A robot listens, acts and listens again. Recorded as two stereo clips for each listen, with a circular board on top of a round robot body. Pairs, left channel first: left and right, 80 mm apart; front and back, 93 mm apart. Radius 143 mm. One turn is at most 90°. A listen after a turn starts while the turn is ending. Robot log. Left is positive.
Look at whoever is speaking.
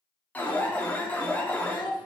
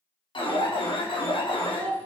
note: The child speaking: 70° left.
cmd yaw +70
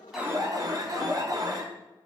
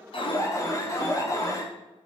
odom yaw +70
cmd idle
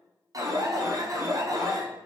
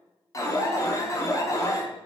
cmd idle
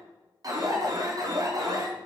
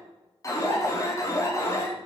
end: I heard a child speaking from this way, but can't make it out now.